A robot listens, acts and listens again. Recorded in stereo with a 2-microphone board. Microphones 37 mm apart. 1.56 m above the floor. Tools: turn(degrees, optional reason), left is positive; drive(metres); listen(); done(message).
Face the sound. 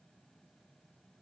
listen()
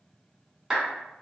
turn(degrees=-15, reason="The clap: about 15° right or 165° right.")
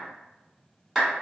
done("Found it: a clap, straight ahead, 1 to 2 m away.")